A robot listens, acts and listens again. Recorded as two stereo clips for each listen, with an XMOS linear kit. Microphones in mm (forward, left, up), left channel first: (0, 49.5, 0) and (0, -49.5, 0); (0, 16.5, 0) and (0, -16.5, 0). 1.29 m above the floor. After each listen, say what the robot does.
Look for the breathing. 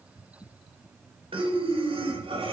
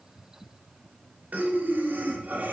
Turn 65° right.
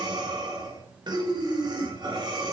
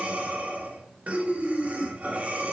Turn 50° right.
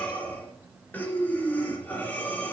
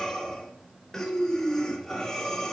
Turn 15° left.
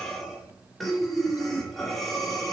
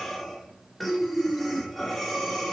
Facing the breathing.